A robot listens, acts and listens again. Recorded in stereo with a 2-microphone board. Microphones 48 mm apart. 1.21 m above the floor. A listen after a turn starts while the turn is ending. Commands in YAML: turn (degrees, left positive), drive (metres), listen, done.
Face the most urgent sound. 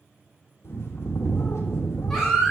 turn: 30
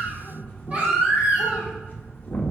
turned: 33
turn: -35
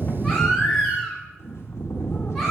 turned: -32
done: "Found it: a baby crying, straight ahead, 2 to 4 m away."